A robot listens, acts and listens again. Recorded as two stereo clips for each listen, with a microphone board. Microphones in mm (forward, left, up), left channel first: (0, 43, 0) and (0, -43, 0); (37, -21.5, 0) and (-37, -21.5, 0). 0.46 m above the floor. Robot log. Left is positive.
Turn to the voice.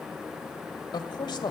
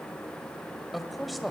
note: The man speaking: 90° left.
cmd yaw +90
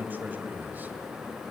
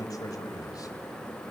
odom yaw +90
note: The man speaking is now 25° right.
cmd yaw -25
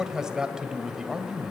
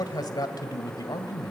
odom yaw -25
note: The man speaking is now 10° right.
cmd yaw -10
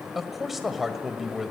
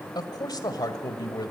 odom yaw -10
end: Found it: a man speaking, straight ahead.